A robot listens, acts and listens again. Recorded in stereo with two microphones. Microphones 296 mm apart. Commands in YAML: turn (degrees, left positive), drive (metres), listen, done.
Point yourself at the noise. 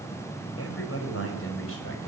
turn: 45
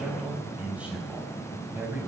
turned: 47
done: "Facing the man speaking."